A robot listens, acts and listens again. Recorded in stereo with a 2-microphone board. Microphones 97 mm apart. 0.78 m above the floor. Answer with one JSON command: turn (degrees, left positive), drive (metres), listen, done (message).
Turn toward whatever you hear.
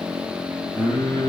{"turn": 50}
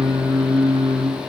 {"done": "Found it: singing, straight ahead."}